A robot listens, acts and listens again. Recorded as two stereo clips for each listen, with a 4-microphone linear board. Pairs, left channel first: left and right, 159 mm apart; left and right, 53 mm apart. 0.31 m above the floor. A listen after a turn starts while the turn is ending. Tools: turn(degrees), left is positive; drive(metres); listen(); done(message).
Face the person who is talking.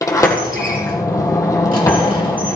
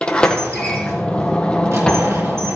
listen()
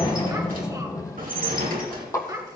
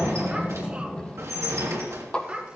turn(degrees=-25)
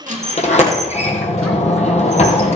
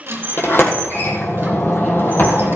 listen()
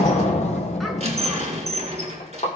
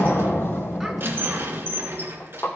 listen()
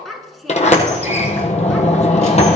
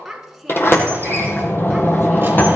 done("Facing the child speaking, 2 to 4 m away.")